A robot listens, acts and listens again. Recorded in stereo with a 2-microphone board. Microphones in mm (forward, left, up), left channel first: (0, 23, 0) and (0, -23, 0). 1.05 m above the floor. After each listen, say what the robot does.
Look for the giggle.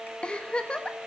Turn 25° left.
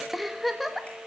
Found it: a giggle, straight ahead, 1 to 2 m away.